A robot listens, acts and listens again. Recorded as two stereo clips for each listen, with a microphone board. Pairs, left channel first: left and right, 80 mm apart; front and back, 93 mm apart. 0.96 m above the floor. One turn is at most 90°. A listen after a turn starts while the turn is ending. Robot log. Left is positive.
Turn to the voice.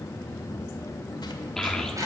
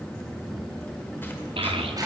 note: The child speaking: 175° left.
cmd yaw +90
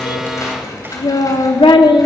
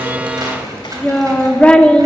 note: The child speaking is now 75° left.
cmd yaw +75
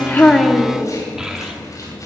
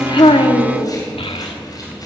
end: Facing the child speaking, 1 to 2 m away.